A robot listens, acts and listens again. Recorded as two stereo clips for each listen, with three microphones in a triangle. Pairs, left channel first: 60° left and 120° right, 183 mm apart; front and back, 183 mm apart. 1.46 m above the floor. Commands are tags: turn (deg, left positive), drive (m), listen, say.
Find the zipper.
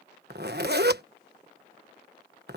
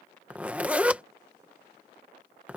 <turn deg="-100"/>
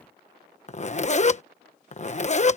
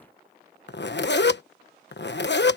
<turn deg="10"/>
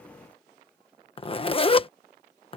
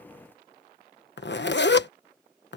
<say>Found it: a zipper, straight ahead.</say>